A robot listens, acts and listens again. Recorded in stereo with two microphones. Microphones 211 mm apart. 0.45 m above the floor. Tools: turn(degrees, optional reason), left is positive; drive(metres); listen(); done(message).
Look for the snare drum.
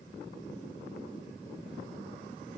listen()
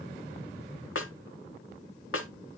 turn(degrees=90)
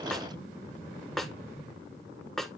done("Found it: a snare drum, straight ahead.")